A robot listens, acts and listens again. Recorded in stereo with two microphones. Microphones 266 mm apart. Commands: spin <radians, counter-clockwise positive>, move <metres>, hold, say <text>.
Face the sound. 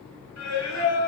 spin 1.31
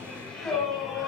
say Facing the singing.